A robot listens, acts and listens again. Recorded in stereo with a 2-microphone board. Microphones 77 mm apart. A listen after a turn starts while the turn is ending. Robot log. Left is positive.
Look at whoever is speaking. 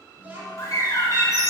note: The child speaking: about 20° right or 160° right.
cmd yaw -20
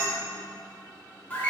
cmd idle
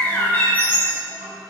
note: So it is at 140° right.
cmd yaw -140
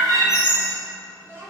note: The child speaking is now 40° right.
cmd yaw -40
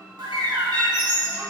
cmd idle
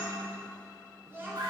note: The child speaking is now 30° right.
cmd yaw -30
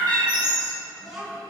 end: Facing the child speaking.